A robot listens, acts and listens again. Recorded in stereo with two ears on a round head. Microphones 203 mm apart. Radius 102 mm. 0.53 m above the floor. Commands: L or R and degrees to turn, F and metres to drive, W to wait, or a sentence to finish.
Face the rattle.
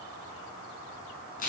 W
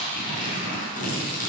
W
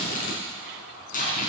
I can't make out a rattle, only tearing paper.